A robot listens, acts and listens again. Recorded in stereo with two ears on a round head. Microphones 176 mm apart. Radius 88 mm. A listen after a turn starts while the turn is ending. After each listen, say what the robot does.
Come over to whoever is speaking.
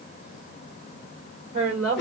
Turn 40° right.
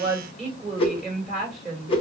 Drive 1.0 m forward.
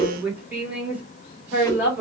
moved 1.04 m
Turn 10° right.
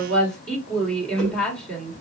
Drive 1.0 m forward.
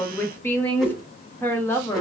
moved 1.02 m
Turn 10° left.
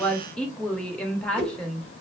Drive 1.0 m forward.
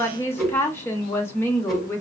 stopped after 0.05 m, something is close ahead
Turn 15° left.
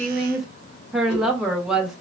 I am next to the woman speaking.